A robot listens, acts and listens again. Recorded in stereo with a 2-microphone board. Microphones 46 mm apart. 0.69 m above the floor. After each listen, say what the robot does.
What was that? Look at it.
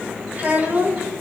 Turn 35° right.
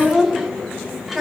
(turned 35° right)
Found it: a child speaking, straight ahead.